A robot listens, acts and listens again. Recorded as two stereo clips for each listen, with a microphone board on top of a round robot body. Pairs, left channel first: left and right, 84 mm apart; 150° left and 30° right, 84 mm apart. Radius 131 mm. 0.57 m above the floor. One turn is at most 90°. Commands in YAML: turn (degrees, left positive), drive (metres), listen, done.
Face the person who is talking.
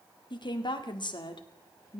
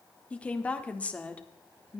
turn: 75
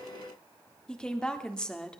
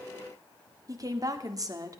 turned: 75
turn: 10
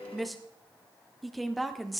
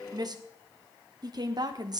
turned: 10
done: "Facing the woman speaking, 1 to 2 m away."